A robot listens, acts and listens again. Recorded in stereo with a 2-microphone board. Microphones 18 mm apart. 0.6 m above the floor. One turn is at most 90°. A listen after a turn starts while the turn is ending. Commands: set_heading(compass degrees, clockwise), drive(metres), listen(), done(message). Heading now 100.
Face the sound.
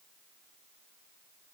listen()
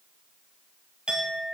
set_heading(165)
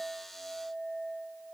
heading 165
done("Facing the clink, 2 to 4 m away.")